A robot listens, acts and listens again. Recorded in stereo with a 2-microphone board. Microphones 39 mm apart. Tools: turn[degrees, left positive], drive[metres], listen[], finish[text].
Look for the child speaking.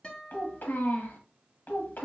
Thought: The child speaking: about 60° left or 120° left.
Action: turn[60]
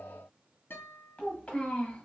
Thought: So it is at 35° left.
Action: turn[35]
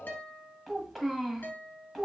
Action: finish[Facing the child speaking.]